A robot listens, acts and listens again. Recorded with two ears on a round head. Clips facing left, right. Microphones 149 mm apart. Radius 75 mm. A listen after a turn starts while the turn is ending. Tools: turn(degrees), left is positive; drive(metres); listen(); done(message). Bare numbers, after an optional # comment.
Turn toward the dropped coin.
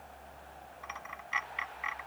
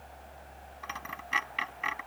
# The dropped coin: about 55° right or 125° right.
turn(-55)
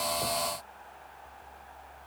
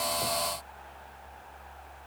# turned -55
listen()
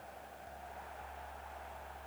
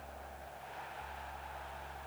done("I heard a dropped coin, but can't make it out now. It was about straight ahead or 70° right.")